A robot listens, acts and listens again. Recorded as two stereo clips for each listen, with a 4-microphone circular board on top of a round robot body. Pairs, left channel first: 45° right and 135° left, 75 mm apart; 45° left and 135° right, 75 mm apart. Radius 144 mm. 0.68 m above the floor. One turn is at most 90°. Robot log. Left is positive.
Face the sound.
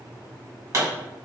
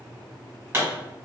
note: The pop: 175° left.
cmd yaw +90
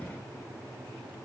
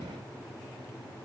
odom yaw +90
note: Nothing new. It was at 85° left.
cmd yaw +85
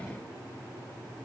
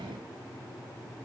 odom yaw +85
end: Facing where the pop came from. I can't hear it now.